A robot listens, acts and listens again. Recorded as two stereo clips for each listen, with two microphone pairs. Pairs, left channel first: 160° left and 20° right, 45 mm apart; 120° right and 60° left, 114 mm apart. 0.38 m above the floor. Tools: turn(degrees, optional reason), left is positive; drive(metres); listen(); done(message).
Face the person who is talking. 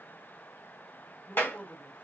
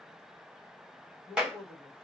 turn(degrees=-165, reason="The man speaking: 165° right.")
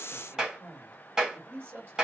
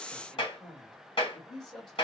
turn(degrees=-35, reason="The man speaking is now 35° right.")
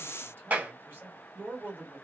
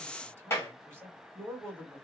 done("Found it: a man speaking, straight ahead, 1 to 2 m away.")